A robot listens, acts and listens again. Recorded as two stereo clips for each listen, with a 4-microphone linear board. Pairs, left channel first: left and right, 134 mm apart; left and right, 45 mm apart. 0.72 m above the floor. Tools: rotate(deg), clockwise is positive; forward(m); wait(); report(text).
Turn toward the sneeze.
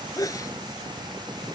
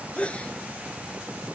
rotate(-25)
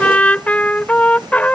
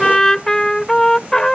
wait()
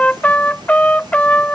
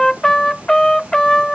report("I heard a sneeze, but can't make it out now. It was about straight ahead or 130° left.")